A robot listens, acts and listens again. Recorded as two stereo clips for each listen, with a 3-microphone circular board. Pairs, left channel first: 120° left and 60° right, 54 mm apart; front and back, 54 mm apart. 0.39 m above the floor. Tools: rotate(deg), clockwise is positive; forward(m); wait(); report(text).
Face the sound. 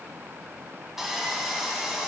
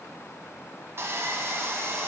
rotate(145)
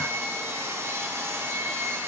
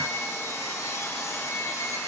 rotate(25)
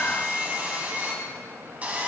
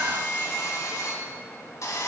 report("Facing the sawing.")